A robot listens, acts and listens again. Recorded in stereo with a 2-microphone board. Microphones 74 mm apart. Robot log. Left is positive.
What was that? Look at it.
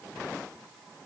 cmd idle
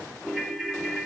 cmd yaw -30
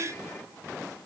cmd idle
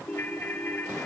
note: So it is at 20° left.
cmd yaw +20
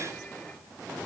cmd idle
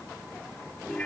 end: Found it: a ringtone, straight ahead, 2 to 4 m away.